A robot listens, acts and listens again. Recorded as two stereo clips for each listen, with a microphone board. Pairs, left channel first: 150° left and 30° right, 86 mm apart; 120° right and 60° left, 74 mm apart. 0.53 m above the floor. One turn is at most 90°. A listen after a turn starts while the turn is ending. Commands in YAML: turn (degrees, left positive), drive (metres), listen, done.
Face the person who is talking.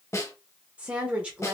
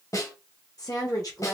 turn: -90
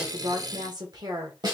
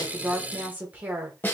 done: "Found it: a woman speaking, straight ahead."